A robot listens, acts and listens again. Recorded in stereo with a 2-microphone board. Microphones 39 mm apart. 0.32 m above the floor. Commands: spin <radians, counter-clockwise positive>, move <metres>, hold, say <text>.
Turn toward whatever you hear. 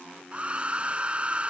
spin -0.44
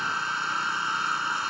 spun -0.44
say Found it: a hair dryer, straight ahead.